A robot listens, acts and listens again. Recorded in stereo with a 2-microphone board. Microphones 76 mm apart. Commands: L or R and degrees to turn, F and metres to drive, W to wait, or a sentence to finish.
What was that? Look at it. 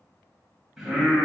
R30
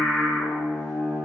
L35
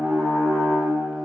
Found it: singing, straight ahead.